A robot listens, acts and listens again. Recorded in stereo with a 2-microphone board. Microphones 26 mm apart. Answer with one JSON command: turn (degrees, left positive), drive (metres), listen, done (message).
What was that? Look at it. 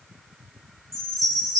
{"turn": 30}
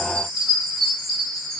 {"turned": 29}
{"turn": 145}
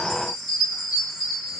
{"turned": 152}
{"turn": -10}
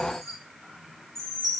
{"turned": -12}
{"done": "Facing the chime."}